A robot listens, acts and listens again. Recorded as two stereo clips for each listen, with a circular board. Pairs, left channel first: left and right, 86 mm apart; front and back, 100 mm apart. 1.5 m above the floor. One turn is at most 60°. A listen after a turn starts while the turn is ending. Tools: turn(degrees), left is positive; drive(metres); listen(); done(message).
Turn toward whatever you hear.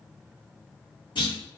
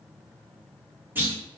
turn(degrees=60)
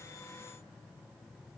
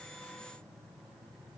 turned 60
turn(degrees=50)
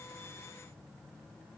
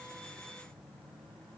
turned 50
done("I heard a clunk from this way, but can't make it out now.")